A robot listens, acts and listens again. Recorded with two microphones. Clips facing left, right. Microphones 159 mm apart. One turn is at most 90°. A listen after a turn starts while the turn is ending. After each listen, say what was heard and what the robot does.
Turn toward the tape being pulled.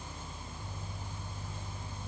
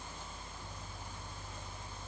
Keep listening.
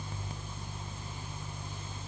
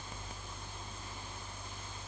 Keep listening.
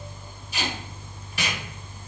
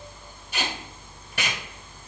The tape being pulled: about 65° right or 115° right. Turn 65° right.
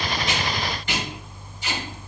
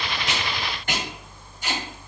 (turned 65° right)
So it is at 50° right. Turn 50° right.
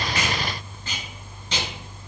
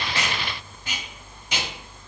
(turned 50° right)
The tape being pulled is now 10° right. Turn 10° right.
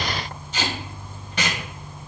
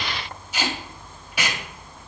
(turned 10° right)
The tape being pulled is now 10° right. Turn 10° right.
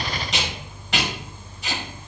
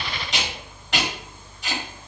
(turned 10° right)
Found it: tape being pulled, straight ahead.